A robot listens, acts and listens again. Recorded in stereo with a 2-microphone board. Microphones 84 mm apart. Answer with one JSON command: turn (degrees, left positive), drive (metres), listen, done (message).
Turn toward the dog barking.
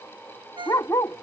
{"turn": 40}
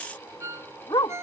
{"turn": 95}
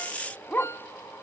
{"turn": 25}
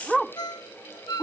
{"done": "Found it: a dog barking, straight ahead."}